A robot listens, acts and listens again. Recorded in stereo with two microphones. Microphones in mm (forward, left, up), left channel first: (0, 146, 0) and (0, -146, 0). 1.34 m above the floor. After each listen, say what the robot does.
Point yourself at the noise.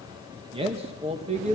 Turn 25° right.
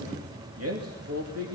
Turn 125° right.
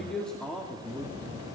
Found it: a man speaking, straight ahead, over 4 m away.